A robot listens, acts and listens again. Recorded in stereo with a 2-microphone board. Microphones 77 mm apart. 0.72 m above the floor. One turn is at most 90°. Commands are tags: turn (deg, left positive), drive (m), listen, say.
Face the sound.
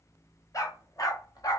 <turn deg="55"/>
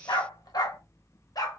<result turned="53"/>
<turn deg="55"/>
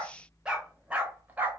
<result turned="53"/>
<turn deg="-25"/>
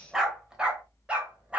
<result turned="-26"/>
<turn deg="-15"/>
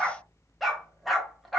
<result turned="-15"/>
<say>Facing the dog barking.</say>